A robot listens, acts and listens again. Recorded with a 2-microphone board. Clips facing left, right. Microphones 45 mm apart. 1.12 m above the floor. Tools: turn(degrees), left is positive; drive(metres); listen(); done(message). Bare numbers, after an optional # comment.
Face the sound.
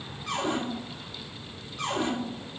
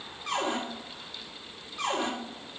# The cupboard door: about 70° right or 110° right.
turn(-70)
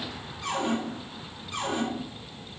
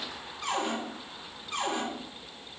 # So it is at 40° right.
turn(-40)
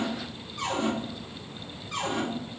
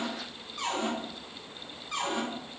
done("Facing the cupboard door.")